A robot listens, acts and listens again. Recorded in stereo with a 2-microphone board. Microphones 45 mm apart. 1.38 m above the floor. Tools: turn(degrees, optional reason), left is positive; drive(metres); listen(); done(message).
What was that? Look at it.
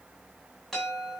turn(degrees=30)
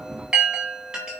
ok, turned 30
turn(degrees=-20, reason="So it is at 20° right.")
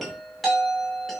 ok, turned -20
done("Facing the chime, over 4 m away.")